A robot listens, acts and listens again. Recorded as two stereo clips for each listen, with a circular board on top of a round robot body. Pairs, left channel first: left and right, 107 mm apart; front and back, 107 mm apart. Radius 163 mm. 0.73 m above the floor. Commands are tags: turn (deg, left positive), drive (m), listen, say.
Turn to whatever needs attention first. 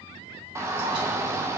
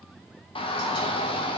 <turn deg="-25"/>
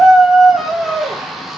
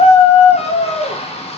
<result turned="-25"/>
<say>Found it: a shout, straight ahead, under 1 m away.</say>